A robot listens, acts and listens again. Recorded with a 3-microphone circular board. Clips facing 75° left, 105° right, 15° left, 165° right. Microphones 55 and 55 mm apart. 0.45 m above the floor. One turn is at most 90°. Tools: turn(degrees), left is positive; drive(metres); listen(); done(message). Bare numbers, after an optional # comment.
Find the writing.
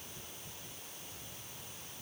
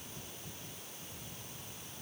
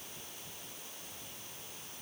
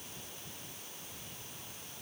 listen()
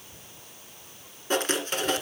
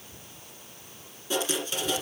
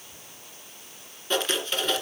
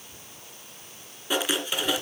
# The writing: 115° left.
turn(90)
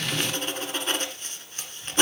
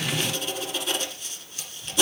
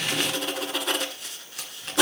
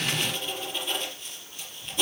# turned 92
# The writing is now 25° left.
turn(25)
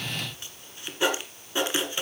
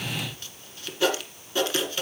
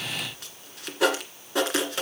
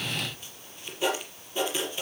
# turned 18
done("Found it: writing, straight ahead, 1 to 2 m away.")